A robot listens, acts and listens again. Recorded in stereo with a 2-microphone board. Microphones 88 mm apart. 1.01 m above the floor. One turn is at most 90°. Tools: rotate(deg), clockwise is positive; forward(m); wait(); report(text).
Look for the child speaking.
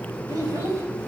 rotate(40)
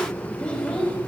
rotate(-15)
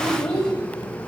rotate(-10)
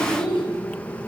rotate(-10)
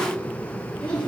rotate(-15)
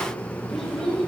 report("Facing the child speaking.")